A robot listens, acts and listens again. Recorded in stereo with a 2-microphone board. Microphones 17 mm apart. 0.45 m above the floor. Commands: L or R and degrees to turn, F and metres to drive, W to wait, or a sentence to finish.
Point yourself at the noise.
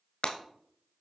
L55
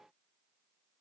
W
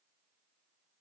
I heard breaking glass, but can't make it out now. It was about straight ahead or 70° left.